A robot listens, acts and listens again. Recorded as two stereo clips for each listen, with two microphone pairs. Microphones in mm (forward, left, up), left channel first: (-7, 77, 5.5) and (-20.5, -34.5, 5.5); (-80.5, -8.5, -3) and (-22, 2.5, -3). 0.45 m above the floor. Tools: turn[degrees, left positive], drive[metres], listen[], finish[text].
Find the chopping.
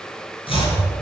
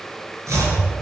Thought: The chopping: 45° left.
Action: turn[45]
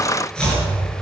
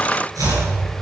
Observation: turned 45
Action: finish[Found it: chopping, straight ahead.]